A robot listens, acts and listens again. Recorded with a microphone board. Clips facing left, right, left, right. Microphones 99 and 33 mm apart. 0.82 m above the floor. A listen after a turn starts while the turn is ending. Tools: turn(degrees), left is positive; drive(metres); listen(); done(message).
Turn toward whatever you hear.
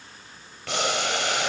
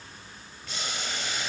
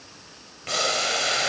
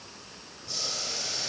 turn(degrees=75)
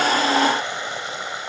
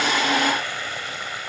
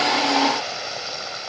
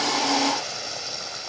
turn(degrees=25)
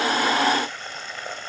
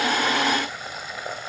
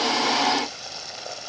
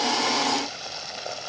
turn(degrees=-10)
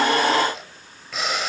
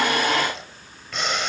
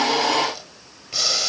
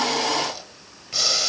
done("Found it: boiling, straight ahead.")